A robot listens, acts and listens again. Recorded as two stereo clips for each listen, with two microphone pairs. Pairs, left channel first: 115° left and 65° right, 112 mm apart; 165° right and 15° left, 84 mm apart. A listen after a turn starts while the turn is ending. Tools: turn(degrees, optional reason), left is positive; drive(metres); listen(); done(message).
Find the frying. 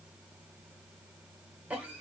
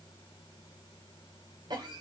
listen()
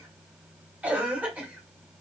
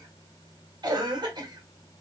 listen()
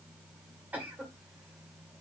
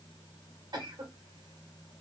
done("I can't make out frying to turn to.")